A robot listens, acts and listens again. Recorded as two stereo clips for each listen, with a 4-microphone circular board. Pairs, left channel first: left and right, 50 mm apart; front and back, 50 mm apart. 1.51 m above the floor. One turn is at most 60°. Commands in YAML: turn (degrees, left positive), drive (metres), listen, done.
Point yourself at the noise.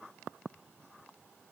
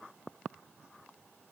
listen: true
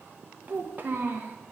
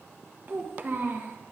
turn: -60
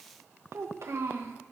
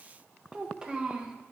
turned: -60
turn: -60
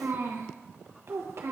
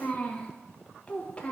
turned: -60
turn: -60
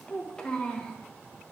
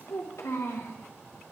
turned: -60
turn: 15
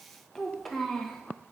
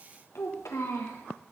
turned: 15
done: "Found it: a child speaking, straight ahead."